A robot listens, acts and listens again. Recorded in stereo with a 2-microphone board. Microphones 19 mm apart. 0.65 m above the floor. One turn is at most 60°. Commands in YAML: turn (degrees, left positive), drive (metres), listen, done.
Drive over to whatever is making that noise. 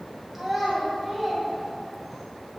turn: -30
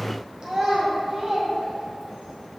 turn: -60
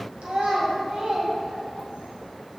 turn: -60
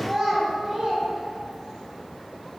turn: -30
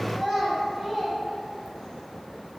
turn: -10
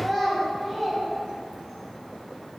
drive: 1.0
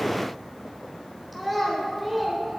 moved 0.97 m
drive: 1.0
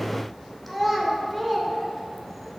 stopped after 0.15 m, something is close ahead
done: "I am next to the child speaking."